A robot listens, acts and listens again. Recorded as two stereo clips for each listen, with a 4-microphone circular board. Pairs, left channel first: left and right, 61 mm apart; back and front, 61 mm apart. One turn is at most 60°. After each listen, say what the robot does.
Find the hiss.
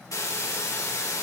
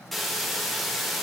Turn 60° left.
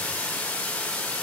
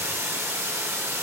Turn 35° left.
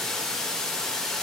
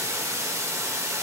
Turn 10° left.
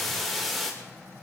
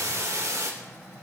Facing the hiss, 2 to 4 m away.